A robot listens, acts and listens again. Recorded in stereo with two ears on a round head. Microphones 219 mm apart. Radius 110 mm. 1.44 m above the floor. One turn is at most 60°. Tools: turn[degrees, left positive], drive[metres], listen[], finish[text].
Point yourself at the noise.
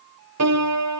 Thought: The piano: about 75° right or 105° right.
Action: turn[-60]
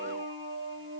Thought: So it is at 50° right.
Action: turn[-50]
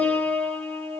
Action: finish[Found it: a piano, straight ahead, 2 to 4 m away.]